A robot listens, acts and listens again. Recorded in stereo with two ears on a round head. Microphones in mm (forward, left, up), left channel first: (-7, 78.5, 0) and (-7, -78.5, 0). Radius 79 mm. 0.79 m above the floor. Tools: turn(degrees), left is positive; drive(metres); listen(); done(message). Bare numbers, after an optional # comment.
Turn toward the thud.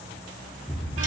turn(30)
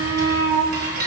listen()
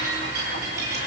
done("I heard a thud, but can't make it out now. It was about 20° right or 140° left.")